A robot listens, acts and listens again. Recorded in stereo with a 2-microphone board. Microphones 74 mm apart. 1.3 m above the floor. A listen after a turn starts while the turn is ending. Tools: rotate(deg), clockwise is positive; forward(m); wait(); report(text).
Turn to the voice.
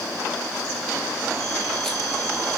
wait()
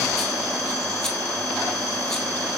wait()
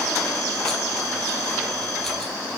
report("I can't make out anyone speaking.")